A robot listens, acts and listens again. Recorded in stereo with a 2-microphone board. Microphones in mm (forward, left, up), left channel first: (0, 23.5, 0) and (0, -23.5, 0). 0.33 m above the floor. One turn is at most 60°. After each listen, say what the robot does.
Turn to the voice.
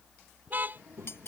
Turn 60° right.
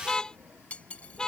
Turn 60° right.
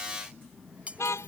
Facing the child speaking.